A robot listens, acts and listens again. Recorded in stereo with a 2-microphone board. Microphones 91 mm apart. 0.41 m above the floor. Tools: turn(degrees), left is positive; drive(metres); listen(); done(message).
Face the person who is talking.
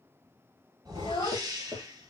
turn(degrees=70)
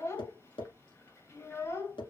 turn(degrees=35)
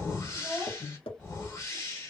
done("Found it: a child speaking, straight ahead, 1 to 2 m away.")